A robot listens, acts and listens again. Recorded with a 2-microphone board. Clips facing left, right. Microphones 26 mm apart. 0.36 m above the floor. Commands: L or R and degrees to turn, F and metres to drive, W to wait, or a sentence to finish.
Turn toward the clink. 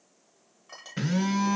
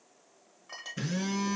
R30
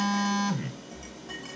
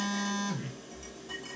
W
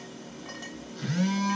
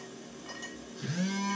W
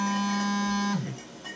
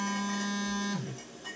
I heard a clink, but can't make it out now. It was about 20° left or 140° right.